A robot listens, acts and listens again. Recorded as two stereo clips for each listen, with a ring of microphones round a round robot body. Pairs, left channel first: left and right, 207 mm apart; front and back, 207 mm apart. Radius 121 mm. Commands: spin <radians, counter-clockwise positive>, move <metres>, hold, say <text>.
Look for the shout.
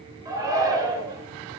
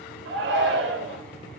spin -2.79
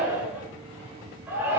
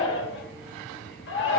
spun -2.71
spin -0.17
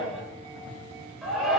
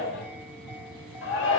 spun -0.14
say Facing the shout, 2 to 4 m away.